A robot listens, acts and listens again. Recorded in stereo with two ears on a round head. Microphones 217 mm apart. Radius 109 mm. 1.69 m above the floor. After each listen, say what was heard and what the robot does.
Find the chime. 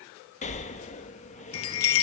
The chime: about 60° left or 120° left. Turn 60° left.
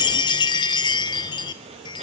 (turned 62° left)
So it is at 20° left. Turn 20° left.
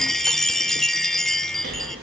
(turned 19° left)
Found it: a chime, straight ahead, 1 to 2 m away.